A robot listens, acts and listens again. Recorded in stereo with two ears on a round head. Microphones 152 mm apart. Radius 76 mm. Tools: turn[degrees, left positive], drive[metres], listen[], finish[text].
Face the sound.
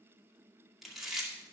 Action: turn[30]
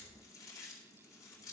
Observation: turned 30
Thought: So it is at 155° left.
Action: turn[155]
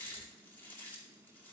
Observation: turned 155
Thought: The chewing is now 15° left.
Action: turn[15]
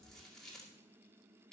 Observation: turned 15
Action: finish[Found it: chewing, straight ahead, 2 to 4 m away.]